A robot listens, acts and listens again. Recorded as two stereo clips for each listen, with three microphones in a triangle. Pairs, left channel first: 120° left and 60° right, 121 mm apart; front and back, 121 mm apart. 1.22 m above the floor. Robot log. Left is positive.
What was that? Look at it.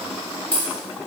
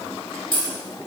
note: The dropped coin: 40° left.
cmd yaw +40
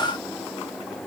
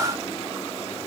end: Facing where the dropped coin came from. I can't hear it now.